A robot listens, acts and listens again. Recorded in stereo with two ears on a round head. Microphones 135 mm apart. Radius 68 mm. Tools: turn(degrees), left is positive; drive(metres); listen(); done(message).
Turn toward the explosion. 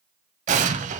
turn(degrees=-50)
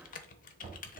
listen()
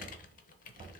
done("I heard an explosion, but can't make it out now. It was about straight ahead or 80° right.")